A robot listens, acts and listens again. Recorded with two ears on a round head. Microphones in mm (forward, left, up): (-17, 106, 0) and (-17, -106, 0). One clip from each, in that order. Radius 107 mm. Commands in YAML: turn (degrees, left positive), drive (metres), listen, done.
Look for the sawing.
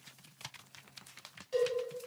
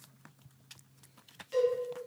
listen: true
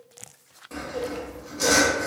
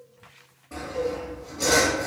turn: 90
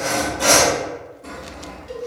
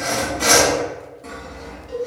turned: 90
done: "Found it: sawing, straight ahead, 1 to 2 m away."